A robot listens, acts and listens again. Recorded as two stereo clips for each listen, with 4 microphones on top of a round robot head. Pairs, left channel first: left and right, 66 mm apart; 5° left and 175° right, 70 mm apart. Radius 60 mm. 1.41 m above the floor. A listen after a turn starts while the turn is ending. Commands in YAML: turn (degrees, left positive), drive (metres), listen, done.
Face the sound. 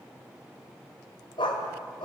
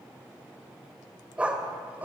turn: 120
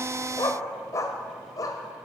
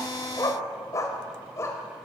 turn: 60
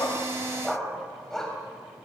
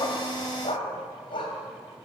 done: "Found it: a dog barking, straight ahead."